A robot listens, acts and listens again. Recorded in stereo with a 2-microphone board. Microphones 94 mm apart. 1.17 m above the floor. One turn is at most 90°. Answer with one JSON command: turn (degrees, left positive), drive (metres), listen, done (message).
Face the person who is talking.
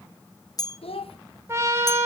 {"turn": 90}
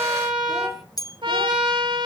{"listen": true}
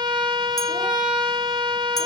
{"listen": true}
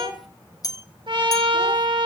{"done": "Facing the child speaking, 1 to 2 m away."}